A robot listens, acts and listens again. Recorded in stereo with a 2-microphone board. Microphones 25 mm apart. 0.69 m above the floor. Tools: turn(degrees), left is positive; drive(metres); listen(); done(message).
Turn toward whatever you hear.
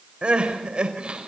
turn(degrees=-40)
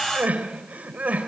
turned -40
turn(degrees=-100)
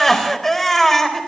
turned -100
turn(degrees=10)
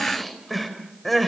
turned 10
done("Facing the crying, 2 to 4 m away.")